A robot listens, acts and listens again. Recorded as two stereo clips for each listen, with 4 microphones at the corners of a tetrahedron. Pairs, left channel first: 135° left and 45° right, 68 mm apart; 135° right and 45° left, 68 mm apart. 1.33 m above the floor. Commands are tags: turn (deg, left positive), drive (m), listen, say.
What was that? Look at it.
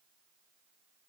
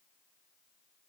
<listen/>
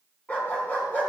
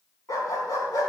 <turn deg="-160"/>
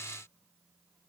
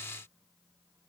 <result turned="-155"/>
<listen/>
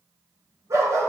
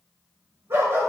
<say>Facing the dog barking, over 4 m away.</say>